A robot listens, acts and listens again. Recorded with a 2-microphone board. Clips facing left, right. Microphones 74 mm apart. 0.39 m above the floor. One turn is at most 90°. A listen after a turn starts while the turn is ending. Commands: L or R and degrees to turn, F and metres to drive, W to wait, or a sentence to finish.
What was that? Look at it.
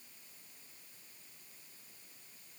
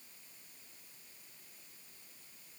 W
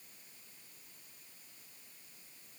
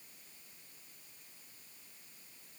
W
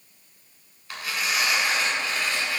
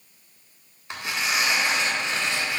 R25
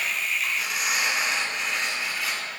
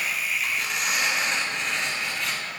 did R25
Found it: tearing paper, straight ahead.